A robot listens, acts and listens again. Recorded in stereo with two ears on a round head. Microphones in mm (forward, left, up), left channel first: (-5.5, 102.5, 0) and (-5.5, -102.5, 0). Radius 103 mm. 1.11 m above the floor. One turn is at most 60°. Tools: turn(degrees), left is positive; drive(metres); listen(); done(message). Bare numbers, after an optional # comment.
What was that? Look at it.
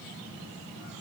listen()
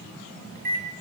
# The microwave: about 40° right or 140° right.
turn(-40)
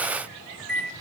done("Facing the microwave.")